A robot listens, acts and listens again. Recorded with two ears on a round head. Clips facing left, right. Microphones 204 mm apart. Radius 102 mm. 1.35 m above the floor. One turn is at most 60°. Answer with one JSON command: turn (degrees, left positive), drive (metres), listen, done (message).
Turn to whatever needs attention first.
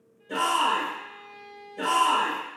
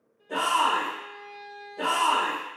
{"turn": 30}
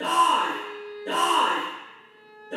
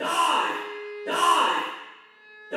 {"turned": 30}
{"done": "Facing the shout."}